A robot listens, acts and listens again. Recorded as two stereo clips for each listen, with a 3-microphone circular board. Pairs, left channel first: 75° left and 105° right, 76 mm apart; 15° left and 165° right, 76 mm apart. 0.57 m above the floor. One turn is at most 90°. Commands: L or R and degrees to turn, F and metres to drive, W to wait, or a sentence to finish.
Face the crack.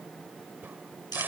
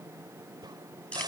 R90
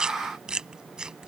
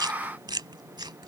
R80
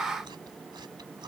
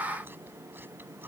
Facing where the crack came from. I can't hear it now.